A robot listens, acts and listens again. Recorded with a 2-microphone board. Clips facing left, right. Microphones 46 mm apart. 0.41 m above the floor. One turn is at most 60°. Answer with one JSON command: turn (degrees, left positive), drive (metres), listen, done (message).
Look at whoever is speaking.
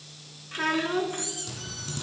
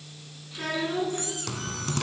{"turn": 50}
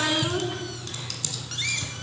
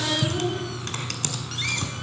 {"turn": 60}
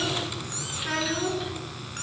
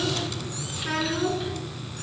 {"done": "Facing the child speaking."}